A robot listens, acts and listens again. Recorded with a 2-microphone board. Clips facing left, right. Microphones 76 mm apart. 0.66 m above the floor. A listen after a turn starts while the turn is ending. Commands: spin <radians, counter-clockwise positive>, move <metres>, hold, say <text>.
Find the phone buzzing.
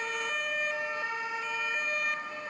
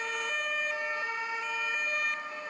hold
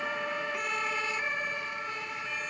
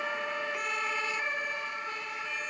hold
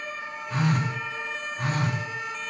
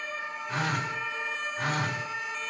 spin -1.13
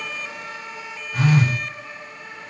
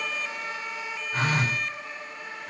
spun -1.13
spin -0.79
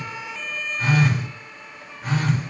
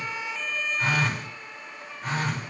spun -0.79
say Facing the phone buzzing, 1 to 2 m away.